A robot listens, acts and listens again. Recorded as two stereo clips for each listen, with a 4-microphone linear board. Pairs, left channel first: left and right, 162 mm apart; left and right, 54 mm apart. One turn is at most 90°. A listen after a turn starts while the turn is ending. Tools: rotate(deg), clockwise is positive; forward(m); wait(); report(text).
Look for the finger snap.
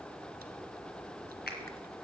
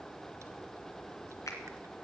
wait()
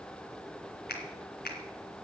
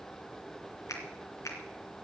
rotate(-70)
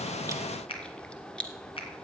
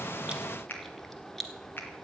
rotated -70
rotate(-35)
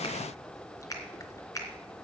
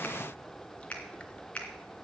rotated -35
rotate(-20)
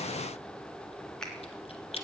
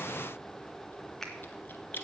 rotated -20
report("Found it: a finger snap, straight ahead.")